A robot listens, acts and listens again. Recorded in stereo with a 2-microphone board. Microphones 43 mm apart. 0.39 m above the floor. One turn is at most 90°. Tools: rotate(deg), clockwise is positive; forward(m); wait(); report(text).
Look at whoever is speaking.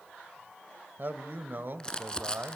rotate(50)
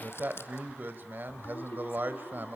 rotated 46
rotate(65)
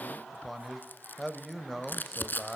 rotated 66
report("Found it: a man speaking, straight ahead.")